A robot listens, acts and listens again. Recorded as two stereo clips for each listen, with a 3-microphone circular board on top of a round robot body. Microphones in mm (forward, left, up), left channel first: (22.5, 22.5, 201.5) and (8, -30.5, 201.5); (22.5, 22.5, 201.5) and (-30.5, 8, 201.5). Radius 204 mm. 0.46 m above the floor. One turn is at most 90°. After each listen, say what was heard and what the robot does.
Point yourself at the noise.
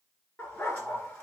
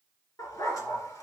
The dog barking: 15° left. Turn 15° left.
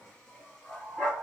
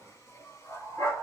Found it: a dog barking, straight ahead.